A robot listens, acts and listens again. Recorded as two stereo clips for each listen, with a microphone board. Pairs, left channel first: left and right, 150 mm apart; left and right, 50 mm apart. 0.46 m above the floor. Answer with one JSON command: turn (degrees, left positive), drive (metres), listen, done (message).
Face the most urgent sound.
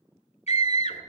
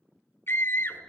{"turn": 50}
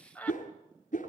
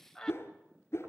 {"turn": 10}
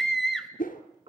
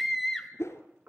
{"done": "Found it: a scream, straight ahead, 2 to 4 m away."}